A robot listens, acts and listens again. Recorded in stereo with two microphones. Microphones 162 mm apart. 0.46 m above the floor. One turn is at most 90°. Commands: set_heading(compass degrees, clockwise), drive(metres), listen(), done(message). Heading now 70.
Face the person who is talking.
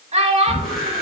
set_heading(115)
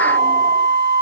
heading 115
listen()
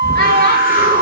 listen()
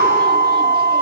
done("I heard a child speaking, but can't make it out now. It was about straight ahead or 90° right.")